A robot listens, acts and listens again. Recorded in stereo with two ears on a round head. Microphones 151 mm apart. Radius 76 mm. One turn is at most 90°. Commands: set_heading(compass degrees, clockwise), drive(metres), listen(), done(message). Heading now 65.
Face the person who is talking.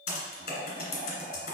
listen()
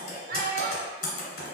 set_heading(120)
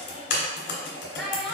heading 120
done("Facing the child speaking, under 1 m away.")